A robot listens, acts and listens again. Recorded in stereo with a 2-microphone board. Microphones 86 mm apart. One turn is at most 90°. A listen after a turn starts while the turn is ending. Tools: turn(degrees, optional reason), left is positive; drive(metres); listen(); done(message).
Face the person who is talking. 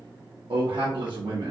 turn(degrees=-70, reason="The man speaking: about 70° right or 110° right.")
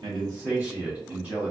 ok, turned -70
turn(degrees=-20, reason="So it is at 20° right.")
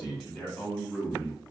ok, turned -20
done("Found it: a man speaking, straight ahead, under 1 m away.")